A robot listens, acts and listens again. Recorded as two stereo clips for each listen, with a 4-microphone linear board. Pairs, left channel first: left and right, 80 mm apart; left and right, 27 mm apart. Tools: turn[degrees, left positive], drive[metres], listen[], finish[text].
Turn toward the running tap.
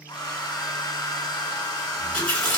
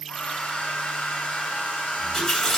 Thought: The running tap: about 15° left or 165° left.
Action: turn[15]
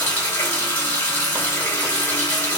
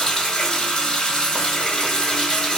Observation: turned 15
Thought: So it is at 150° left.
Action: turn[150]
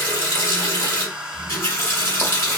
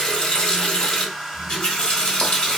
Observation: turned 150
Thought: The running tap is now 40° left.
Action: turn[40]
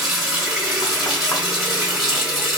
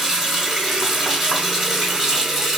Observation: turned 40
Action: finish[Found it: a running tap, straight ahead.]